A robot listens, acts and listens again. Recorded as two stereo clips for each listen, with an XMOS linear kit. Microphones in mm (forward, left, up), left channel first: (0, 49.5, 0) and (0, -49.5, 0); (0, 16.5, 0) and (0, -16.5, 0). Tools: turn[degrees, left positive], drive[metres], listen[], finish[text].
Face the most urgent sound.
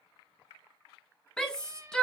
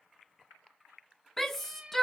Action: turn[30]
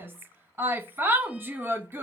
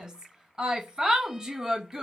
Thought: So it is at 20° right.
Action: turn[-20]
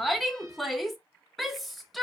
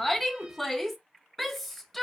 Action: finish[Found it: a shout, straight ahead.]